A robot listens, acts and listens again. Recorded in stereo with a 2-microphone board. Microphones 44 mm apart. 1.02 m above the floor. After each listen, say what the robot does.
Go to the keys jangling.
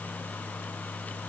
Keep listening.
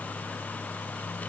Keep listening.
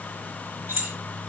Turn 65° right.
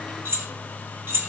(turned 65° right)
Turn 50° right.
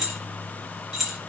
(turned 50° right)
Drive 1.0 m forward.
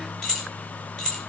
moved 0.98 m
Turn 15° left.
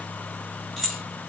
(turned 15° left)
Drive 1.0 m forward.
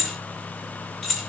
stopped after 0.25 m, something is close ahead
Turn 10° left.
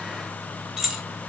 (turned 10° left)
Arrived at the keys jangling, straight ahead.